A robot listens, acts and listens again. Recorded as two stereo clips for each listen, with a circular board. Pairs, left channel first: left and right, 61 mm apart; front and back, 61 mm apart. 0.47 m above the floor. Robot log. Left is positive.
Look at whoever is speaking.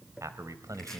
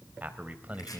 note: The man speaking: 115° right.
cmd yaw -115
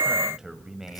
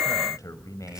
end: Found it: a man speaking, straight ahead.